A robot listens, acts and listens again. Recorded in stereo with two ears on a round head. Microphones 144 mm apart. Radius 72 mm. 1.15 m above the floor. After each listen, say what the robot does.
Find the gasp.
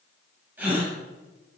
Turn 30° right.
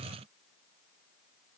Keep listening.
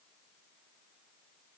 I heard a gasp, but can't make it out now. It was about 20° left or 140° right.